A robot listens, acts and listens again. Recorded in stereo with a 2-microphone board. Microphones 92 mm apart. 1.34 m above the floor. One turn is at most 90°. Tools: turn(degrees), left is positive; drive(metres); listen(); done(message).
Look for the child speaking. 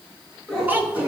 turn(degrees=-20)
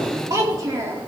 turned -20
turn(degrees=-35)
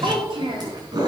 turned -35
turn(degrees=-90)
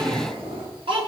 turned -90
turn(degrees=-70)
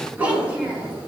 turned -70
turn(degrees=-15)
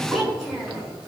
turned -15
done("Facing the child speaking, over 4 m away.")